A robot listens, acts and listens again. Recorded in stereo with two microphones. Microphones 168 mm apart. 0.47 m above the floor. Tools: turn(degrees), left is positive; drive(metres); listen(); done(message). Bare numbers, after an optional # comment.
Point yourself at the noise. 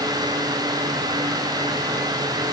listen()
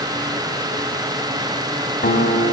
# The guitar: about 65° left or 115° left.
turn(65)
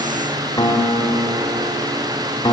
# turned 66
# So it is at 25° left.
turn(25)
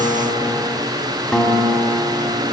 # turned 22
done("Facing the guitar.")